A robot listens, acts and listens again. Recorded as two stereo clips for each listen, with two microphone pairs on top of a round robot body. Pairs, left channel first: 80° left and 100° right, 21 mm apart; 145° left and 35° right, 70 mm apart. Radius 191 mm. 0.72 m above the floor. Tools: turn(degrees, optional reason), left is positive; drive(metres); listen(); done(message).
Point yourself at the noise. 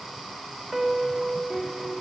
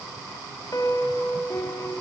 turn(degrees=175, reason="The piano: 175° left.")
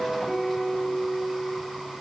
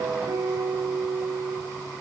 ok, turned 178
done("Facing the piano.")